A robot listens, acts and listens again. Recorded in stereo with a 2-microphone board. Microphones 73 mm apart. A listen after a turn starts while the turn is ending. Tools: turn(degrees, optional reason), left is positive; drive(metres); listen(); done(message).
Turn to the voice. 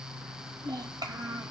turn(degrees=-70, reason="The child speaking: about 70° right or 110° right.")
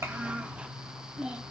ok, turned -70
turn(degrees=-15, reason="So it is at 15° right.")
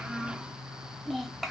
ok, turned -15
done("Facing the child speaking, 1 to 2 m away.")